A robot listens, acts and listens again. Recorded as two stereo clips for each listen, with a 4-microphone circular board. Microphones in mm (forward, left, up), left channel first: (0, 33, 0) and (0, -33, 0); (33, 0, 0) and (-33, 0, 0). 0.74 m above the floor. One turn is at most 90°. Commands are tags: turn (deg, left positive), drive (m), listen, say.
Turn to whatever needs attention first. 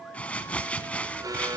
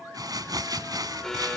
<turn deg="-85"/>
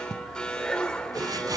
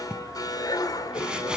<turn deg="15"/>
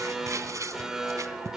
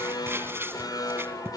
<turn deg="-10"/>
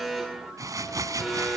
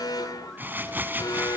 <say>Found it: an alarm, straight ahead, 2 to 4 m away.</say>